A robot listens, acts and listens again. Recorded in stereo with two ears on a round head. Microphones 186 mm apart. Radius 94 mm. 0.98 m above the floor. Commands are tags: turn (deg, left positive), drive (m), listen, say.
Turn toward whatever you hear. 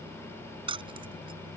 <turn deg="-25"/>
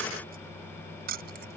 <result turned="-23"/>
<turn deg="-130"/>
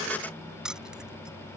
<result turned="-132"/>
<say>Facing the keys jangling.</say>